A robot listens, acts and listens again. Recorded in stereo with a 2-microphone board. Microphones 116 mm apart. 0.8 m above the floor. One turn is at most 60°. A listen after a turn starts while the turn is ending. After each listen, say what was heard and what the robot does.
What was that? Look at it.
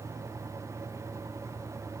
Keep listening.
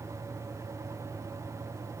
Keep listening.
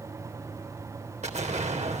Turn 60° right.
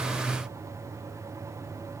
Nothing new. It was at 30° right. Turn 30° right.
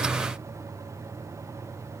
Facing where the explosion came from. I can't hear it now.